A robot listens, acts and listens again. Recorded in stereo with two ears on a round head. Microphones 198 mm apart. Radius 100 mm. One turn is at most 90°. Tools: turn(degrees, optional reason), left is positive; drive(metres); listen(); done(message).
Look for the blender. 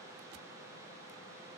listen()
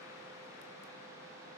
listen()
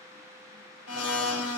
turn(degrees=90)
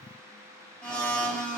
done("Facing the blender, 1 to 2 m away.")